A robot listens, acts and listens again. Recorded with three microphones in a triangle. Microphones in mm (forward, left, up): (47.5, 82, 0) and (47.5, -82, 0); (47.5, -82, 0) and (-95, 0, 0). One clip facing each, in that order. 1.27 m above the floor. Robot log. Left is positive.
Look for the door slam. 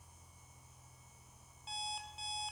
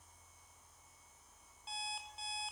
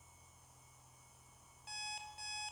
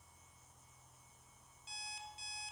cmd idle
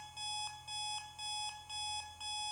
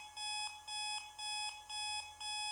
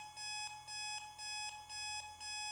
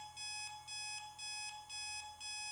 cmd idle
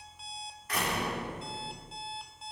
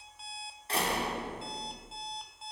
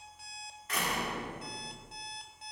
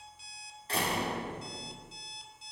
note: The door slam: 150° right.
cmd yaw -150
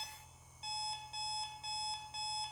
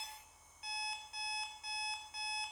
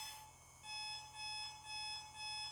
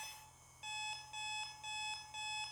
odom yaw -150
end: Facing where the door slam came from. I can't hear it now.